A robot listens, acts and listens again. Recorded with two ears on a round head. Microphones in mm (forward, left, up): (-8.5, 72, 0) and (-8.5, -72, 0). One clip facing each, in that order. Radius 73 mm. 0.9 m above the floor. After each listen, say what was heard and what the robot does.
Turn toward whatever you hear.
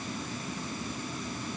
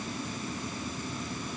Keep listening.
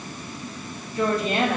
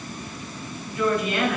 The woman speaking: about 30° left or 150° left. Turn 30° left.
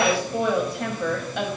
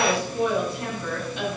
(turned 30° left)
So it is at 125° left. Turn 125° left.
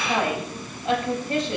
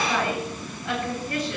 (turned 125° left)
The woman speaking is now 25° left. Turn 25° left.
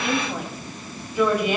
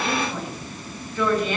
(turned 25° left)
The woman speaking is now 10° left. Turn 10° left.
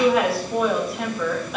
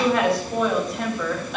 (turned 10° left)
Found it: a woman speaking, straight ahead.